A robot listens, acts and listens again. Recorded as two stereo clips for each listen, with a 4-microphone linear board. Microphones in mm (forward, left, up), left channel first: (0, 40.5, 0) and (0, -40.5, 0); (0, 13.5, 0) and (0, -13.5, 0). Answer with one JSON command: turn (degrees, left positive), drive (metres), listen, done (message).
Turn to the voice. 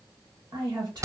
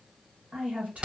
{"turn": -60}
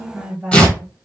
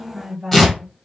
{"turn": -20}
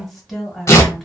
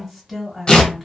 {"done": "Facing the woman speaking, 1 to 2 m away."}